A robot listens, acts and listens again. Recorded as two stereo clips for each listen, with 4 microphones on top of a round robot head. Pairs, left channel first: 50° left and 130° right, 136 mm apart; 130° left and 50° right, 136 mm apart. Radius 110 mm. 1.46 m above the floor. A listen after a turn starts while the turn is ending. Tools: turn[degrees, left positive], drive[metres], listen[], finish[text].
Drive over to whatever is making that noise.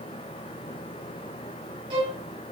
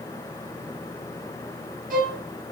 Thought: The violin: 75° right.
Action: turn[-75]
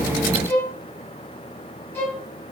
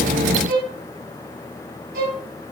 Thought: The violin is now 25° right.
Action: turn[-25]
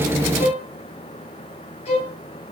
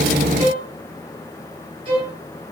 Action: drive[1.0]
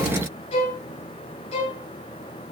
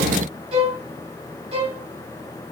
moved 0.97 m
Action: drive[1.0]
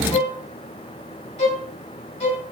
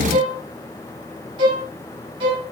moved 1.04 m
Action: drive[1.0]
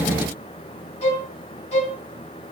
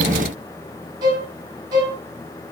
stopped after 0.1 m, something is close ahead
Thought: The violin is now 10° left.
Action: turn[10]
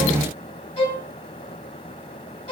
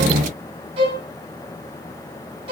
Action: finish[I am next to the violin.]